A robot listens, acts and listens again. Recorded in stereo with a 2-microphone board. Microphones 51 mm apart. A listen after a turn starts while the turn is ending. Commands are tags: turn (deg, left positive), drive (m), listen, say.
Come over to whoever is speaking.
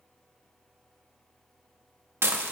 <listen/>
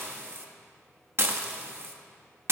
<listen/>
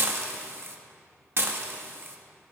<say>I can't make out anyone speaking, only dishes clattering.</say>